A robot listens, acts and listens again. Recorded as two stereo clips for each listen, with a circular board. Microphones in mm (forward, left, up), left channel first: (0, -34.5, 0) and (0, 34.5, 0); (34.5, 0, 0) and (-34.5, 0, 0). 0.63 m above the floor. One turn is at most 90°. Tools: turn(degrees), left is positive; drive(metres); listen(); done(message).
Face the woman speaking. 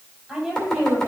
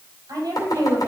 turn(degrees=90)
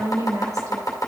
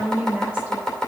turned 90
turn(degrees=90)
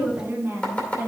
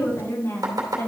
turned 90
turn(degrees=35)
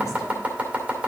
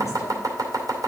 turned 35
listen()
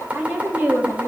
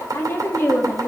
turn(degrees=55)
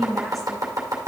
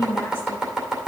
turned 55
done("Facing the woman speaking, 1 to 2 m away.")